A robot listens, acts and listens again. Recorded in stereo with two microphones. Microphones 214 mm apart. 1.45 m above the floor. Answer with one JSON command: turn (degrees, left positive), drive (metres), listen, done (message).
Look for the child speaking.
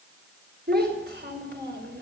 {"turn": -55}
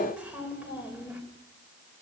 {"turn": -10}
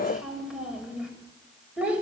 {"done": "Found it: a child speaking, straight ahead."}